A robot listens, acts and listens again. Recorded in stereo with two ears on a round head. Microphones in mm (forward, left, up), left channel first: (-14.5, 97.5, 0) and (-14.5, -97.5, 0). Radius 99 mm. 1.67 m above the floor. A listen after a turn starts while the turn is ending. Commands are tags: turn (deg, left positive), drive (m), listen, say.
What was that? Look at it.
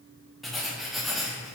<turn deg="30"/>
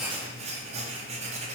<turn deg="-30"/>
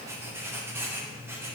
<turn deg="-10"/>
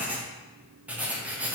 <say>Facing the writing.</say>